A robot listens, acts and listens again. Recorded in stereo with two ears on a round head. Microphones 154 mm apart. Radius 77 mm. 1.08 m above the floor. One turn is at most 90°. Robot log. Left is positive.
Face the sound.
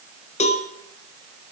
note: The cowbell: about 40° left or 140° left.
cmd yaw +40
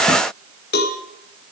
note: So it is at 95° left.
cmd yaw +90
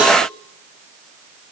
note: The cowbell is now 10° right.
cmd yaw -10
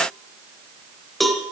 end: Facing the cowbell.